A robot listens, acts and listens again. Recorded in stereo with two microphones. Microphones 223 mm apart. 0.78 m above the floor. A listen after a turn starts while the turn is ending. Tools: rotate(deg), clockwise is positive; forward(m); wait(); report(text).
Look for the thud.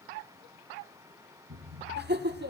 rotate(75)
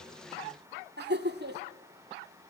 wait()
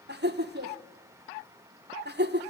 report("I heard a thud, but can't make it out now. It was about straight ahead or 30° right.")